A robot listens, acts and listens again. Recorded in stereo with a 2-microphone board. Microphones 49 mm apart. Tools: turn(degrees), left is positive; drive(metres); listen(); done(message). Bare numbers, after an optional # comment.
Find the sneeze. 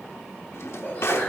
# The sneeze: about 30° left or 150° left.
turn(30)
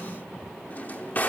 listen()
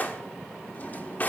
done("I heard a sneeze, but can't make it out now. It was about straight ahead or 120° left.")